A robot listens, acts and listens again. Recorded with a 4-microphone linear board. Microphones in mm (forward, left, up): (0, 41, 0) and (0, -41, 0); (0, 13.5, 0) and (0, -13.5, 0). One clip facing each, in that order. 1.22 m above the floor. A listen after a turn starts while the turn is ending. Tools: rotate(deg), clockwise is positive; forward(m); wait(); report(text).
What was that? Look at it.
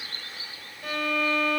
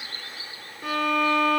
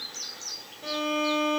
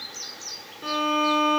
rotate(65)
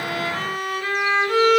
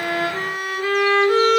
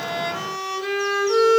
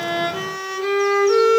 rotate(15)
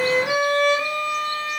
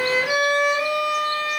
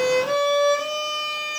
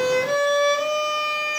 report("Facing the violin.")